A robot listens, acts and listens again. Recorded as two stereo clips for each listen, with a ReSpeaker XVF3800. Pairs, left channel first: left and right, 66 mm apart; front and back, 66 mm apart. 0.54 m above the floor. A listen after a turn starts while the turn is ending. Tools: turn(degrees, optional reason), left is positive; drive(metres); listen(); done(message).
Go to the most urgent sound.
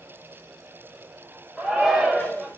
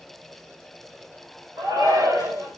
turn(degrees=-170, reason="The shout: 170° right.")
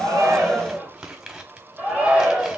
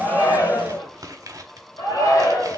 turn(degrees=-15, reason="The shout is now 15° right.")
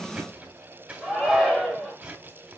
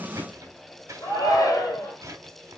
drive(metres=1.0)
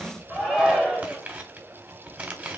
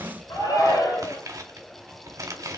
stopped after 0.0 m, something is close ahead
done("Blocked. The shout is further on, straight ahead.")